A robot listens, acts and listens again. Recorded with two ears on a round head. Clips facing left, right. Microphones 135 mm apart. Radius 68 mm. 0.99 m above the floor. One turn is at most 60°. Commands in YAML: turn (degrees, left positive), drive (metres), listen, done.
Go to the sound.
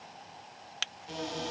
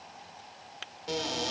turn: -60
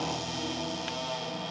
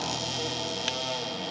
turn: -45
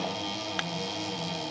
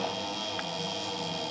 drive: 1.0
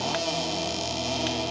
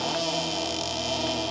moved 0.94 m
drive: 1.0
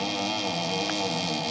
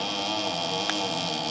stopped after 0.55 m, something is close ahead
turn: 10
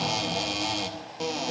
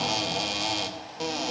done: "I am next to the cupboard door."